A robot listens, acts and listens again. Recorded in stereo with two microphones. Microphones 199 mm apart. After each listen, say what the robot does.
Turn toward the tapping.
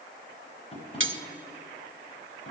Turn 30° left.
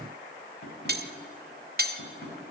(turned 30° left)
Turn 120° left.
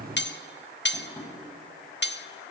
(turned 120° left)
Turn 10° left.
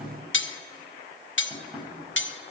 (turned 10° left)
Found it: tapping, straight ahead, over 4 m away.